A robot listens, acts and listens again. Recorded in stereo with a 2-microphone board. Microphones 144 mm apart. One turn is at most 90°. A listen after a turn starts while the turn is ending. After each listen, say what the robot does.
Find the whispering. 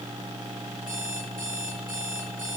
Keep listening.
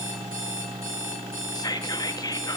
Turn 30° left.
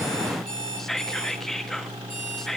Found it: whispering, straight ahead.